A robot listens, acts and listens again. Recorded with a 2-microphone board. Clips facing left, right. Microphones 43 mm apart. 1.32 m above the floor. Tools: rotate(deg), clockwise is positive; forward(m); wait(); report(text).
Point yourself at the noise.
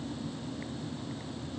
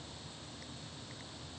wait()
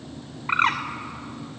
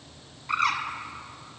rotate(-40)
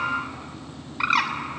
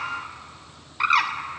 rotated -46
report("Found it: a bird, straight ahead, 2 to 4 m away.")